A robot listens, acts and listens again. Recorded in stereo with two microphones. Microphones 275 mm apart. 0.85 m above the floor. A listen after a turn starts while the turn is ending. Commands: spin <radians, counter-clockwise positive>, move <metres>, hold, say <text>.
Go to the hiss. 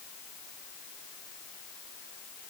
hold
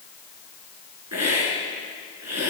spin -1.13
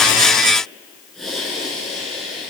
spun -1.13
move 1.0
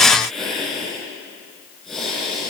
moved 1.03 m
move 1.0
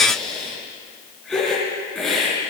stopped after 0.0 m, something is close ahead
say Blocked. The hiss is further on, straight ahead.